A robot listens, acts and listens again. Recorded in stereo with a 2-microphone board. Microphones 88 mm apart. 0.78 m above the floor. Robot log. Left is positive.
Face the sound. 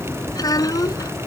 note: The child speaking: about 45° left or 135° left.
cmd yaw +45
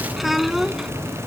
end: Found it: a child speaking, straight ahead.